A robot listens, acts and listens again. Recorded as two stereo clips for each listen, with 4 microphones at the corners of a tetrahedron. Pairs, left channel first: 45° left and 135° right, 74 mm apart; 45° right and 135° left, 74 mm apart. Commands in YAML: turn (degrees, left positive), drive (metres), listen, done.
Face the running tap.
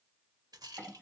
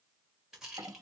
listen: true
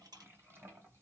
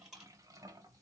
listen: true
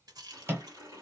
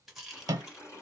turn: -95
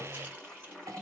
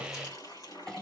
turn: -35
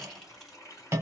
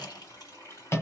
done: "Found it: a running tap, straight ahead."